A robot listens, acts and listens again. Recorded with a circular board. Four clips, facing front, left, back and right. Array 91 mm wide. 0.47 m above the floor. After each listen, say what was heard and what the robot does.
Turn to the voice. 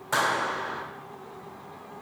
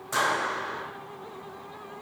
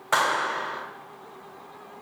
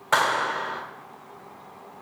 Keep listening.
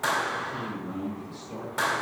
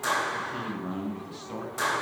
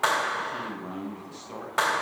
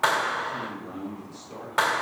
The man speaking: 125° left. Turn 125° left.
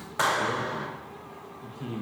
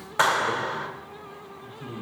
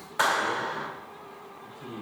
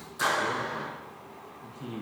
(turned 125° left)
The man speaking is now 20° right. Turn 20° right.
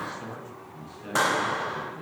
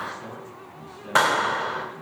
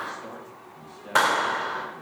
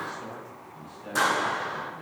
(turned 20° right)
Found it: a man speaking, straight ahead, over 4 m away.